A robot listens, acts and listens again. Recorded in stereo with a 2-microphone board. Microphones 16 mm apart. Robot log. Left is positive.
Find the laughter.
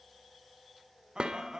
note: The laughter: about 45° right or 135° right.
cmd yaw -45
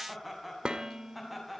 end: Found it: laughter, straight ahead, over 4 m away.